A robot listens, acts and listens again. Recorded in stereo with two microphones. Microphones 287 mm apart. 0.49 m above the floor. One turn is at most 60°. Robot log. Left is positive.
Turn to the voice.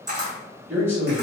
cmd yaw -30
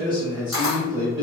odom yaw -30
note: So it is at 20° left.
cmd yaw +20
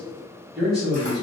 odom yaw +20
end: Found it: a man speaking, straight ahead.